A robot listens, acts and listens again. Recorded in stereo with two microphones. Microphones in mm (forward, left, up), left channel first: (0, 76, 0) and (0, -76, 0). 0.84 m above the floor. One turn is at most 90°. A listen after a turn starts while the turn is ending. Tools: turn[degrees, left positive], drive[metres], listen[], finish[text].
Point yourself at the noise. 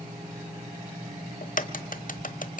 Thought: The crack: about 65° left or 115° left.
Action: turn[65]
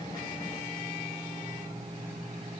Action: listen[]
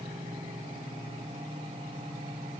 Action: finish[I heard a crack, but can't make it out now. It was about straight ahead or 50° left.]